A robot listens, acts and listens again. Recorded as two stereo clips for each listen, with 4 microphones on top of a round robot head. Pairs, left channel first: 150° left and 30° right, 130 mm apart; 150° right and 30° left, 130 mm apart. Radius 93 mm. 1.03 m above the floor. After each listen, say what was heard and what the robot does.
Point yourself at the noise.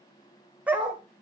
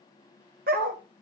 The dog barking: 50° left. Turn 50° left.
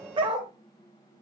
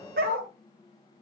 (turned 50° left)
The dog barking is now 25° left. Turn 25° left.
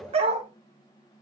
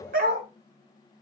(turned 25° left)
The dog barking is now 15° left. Turn 15° left.
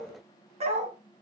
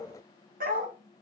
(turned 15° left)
The dog barking is now 15° left. Turn 15° left.
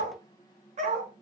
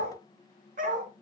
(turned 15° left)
Found it: a dog barking, straight ahead, 2 to 4 m away.